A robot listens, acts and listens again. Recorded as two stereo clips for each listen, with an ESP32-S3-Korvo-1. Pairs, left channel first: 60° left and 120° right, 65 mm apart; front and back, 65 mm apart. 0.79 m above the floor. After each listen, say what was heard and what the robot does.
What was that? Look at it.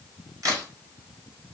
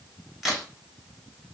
The crack: 95° right. Turn 95° right.
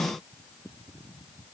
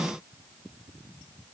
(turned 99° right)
I heard a crack from this way, but can't make it out now.